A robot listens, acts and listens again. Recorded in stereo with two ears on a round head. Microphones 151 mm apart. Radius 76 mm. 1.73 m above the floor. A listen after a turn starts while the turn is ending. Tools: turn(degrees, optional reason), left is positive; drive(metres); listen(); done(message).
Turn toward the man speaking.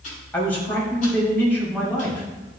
turn(degrees=30)
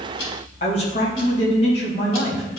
turn(degrees=135, reason="So it is at 135° left.")
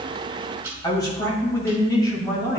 turn(degrees=25, reason="The man speaking is now 25° left.")
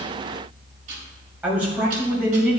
turn(degrees=-10, reason="The man speaking is now 10° right.")
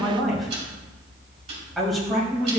done("Facing the man speaking, 2 to 4 m away.")